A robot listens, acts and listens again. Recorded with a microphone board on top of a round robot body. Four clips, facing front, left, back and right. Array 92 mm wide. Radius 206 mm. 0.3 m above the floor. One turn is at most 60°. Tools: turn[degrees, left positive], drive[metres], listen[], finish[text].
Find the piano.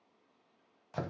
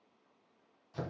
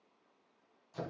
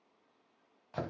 Action: listen[]
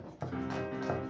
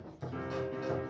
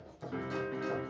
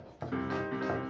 Thought: The piano: 85° right.
Action: turn[-60]
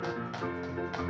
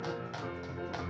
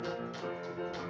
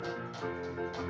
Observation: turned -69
Thought: The piano is now 15° right.
Action: turn[-15]
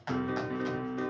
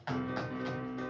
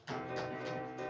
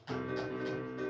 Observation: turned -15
Action: finish[Facing the piano.]